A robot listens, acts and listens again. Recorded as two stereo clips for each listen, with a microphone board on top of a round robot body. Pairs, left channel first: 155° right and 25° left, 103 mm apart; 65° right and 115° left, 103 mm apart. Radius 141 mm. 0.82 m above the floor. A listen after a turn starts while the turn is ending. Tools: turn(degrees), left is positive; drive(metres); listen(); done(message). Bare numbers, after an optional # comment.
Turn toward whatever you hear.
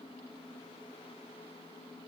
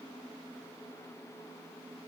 listen()
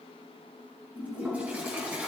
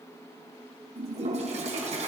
# The toilet flushing: 100° left.
turn(100)
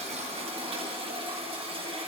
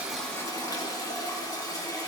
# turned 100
# The toilet flushing is now 10° right.
turn(-10)
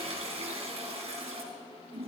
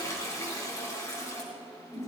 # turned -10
done("Found it: a toilet flushing, straight ahead.")